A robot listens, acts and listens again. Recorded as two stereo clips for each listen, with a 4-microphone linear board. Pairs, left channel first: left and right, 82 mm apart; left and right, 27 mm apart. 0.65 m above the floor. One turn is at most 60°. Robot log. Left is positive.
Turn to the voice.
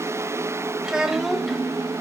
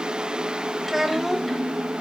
cmd yaw +30
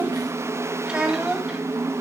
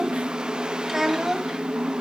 cmd yaw -30
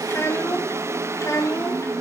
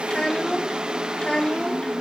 note: So it is at 35° left.
cmd yaw +35
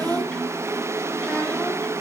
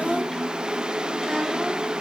note: The child speaking is now 15° left.
cmd yaw +15
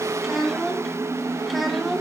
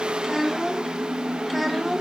end: Facing the child speaking, 2 to 4 m away.